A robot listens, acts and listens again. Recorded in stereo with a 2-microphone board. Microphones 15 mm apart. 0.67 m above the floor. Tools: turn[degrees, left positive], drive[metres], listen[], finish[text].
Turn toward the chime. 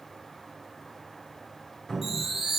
Thought: The chime: about 15° right or 165° right.
Action: turn[-15]
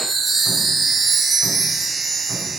Action: finish[Found it: a chime, straight ahead.]